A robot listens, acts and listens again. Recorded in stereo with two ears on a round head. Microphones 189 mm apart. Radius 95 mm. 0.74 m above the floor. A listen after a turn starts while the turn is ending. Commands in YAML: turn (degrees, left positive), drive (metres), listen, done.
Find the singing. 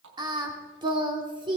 turn: -25
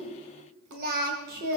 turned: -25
turn: -130
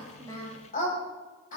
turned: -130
turn: 35
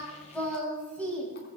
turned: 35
done: "Found it: singing, straight ahead, over 4 m away."